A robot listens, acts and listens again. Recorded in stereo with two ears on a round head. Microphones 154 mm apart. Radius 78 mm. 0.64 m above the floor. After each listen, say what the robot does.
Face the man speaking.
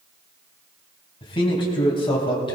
Turn 30° left.
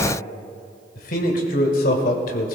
Turn 125° left.
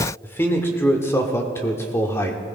Turn 15° left.
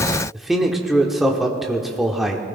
Facing the man speaking, 1 to 2 m away.